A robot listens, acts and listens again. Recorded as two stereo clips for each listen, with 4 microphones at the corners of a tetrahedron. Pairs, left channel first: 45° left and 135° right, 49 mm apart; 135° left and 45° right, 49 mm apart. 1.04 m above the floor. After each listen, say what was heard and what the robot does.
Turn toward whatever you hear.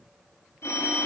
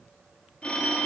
The phone ringing: 65° left. Turn 65° left.
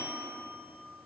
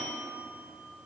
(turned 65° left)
Found it: a phone ringing, straight ahead, 1 to 2 m away.